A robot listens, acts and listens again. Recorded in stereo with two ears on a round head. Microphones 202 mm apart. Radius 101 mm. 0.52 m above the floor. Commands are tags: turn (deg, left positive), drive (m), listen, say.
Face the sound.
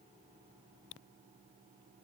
<listen/>
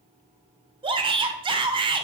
<turn deg="-20"/>
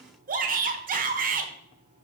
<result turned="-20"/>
<turn deg="-135"/>
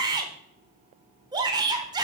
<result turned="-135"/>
<turn deg="-20"/>
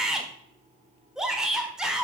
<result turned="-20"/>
<say>Facing the shout.</say>